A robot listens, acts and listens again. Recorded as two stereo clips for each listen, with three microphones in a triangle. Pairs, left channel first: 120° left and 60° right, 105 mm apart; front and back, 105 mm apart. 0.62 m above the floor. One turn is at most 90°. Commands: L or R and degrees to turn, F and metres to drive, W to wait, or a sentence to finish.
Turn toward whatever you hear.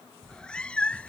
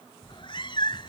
L40
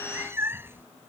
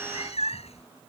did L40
L10
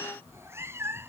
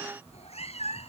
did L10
Facing the cat meowing.